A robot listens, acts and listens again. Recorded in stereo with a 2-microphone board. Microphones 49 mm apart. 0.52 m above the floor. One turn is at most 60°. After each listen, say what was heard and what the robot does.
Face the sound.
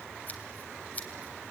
The scissors: about 35° left or 145° left. Turn 35° left.
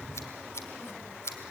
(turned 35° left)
So it is at 105° left. Turn 60° left.
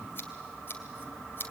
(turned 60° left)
The scissors is now 50° left. Turn 50° left.
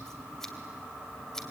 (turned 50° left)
The scissors is now 10° left. Turn 10° left.
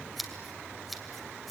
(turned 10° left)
Facing the scissors.